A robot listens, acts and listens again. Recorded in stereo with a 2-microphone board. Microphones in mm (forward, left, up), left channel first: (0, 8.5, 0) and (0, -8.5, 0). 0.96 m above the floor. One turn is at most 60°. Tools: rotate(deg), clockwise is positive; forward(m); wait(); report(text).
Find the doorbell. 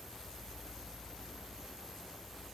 wait()
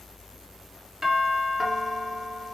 rotate(35)
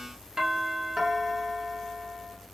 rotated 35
rotate(60)
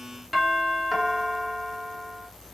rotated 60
rotate(30)
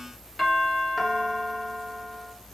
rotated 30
rotate(15)
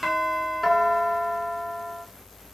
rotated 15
report("Found it: a doorbell, straight ahead, 1 to 2 m away.")